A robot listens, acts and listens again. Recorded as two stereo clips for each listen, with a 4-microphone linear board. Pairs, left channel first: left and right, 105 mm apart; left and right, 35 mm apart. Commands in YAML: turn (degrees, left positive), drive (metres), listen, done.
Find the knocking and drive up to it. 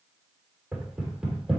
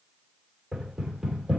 turn: -30
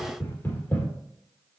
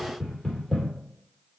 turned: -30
turn: 20
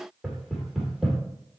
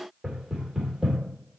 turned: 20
drive: 1.0
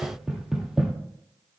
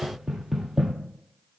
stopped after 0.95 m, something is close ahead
done: "I am next to the knocking."